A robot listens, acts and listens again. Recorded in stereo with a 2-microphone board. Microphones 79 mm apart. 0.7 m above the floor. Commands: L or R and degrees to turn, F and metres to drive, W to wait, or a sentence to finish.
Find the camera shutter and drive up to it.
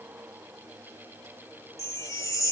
W
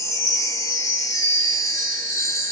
W
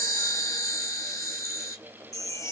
I can't make out a camera shutter, only a chime.